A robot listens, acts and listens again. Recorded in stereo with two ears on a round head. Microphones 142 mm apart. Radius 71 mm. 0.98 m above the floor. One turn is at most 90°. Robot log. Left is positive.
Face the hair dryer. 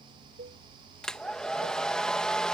cmd yaw +30
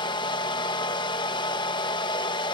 note: So it is at 145° left.
cmd yaw +90
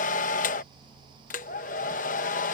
note: The hair dryer is now 65° left.
cmd yaw +65
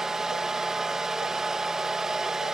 end: Found it: a hair dryer, straight ahead.